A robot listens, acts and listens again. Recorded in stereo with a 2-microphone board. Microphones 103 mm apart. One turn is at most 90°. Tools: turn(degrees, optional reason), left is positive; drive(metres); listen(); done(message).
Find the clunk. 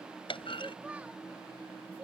turn(degrees=60, reason="The clunk: about 60° left or 120° left.")
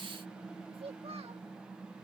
listen()
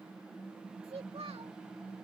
done("I heard a clunk, but can't make it out now. It was about straight ahead or 60° left.")